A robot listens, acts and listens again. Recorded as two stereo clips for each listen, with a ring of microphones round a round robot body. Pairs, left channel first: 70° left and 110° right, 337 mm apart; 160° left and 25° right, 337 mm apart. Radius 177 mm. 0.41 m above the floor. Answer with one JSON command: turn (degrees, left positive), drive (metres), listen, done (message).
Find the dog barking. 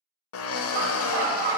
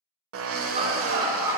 {"turn": -105}
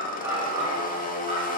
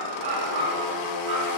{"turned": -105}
{"turn": -40}
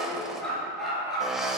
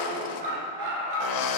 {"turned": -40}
{"turn": -25}
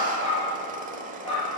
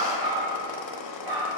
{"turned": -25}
{"done": "Found it: a dog barking, straight ahead, 2 to 4 m away."}